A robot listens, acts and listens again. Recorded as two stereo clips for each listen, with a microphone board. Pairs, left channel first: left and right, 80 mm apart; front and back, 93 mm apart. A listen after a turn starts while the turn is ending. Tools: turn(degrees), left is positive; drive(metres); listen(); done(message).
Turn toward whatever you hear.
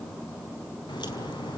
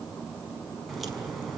turn(degrees=90)
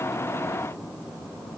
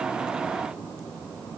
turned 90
done("Facing where the crack came from. I can't hear it now.")